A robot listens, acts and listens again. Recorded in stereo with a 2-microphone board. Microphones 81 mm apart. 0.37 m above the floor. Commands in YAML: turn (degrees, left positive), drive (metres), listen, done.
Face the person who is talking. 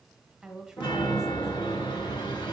turn: -30
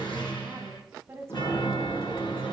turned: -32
turn: -140
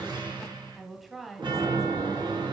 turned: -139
done: "Facing the woman speaking, 1 to 2 m away."